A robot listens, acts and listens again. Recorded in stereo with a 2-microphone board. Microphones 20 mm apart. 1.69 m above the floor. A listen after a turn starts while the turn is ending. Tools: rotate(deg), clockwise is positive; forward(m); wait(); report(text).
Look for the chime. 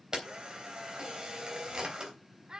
wait()
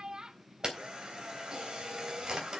wait()
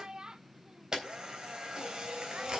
report("I can't make out a chime to turn to.")